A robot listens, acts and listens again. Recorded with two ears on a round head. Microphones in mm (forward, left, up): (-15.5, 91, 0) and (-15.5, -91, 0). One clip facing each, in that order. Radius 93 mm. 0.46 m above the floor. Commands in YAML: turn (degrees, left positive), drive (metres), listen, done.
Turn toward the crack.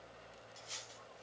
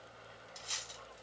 listen: true
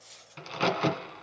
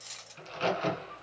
turn: 70
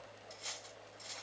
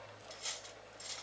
listen: true
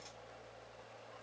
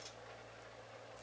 done: "I heard a crack, but can't make it out now. It was about straight ahead or 40° left."